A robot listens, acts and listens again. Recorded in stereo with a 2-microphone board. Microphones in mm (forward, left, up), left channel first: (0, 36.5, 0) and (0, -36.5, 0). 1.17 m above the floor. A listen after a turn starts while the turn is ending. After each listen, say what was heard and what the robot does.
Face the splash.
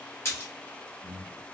The splash: about 40° left or 140° left. Turn 40° left.
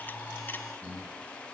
Keep listening.
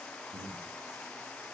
I heard a splash, but can't make it out now. It was about straight ahead or 100° left.